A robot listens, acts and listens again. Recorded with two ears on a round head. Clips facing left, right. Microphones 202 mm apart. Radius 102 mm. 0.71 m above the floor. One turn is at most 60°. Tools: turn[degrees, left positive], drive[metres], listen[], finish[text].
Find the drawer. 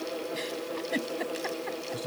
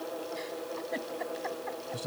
Action: listen[]
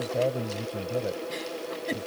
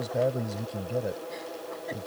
Action: listen[]
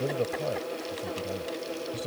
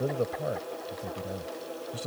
Action: finish[I can't make out a drawer to turn to.]